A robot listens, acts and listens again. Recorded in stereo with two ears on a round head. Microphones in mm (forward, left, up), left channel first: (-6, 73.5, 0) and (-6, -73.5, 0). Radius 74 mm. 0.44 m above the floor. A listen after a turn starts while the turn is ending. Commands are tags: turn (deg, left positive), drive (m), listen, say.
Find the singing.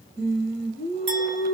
<turn deg="-70"/>
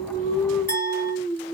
<turn deg="-25"/>
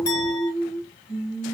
<say>Facing the singing, 1 to 2 m away.</say>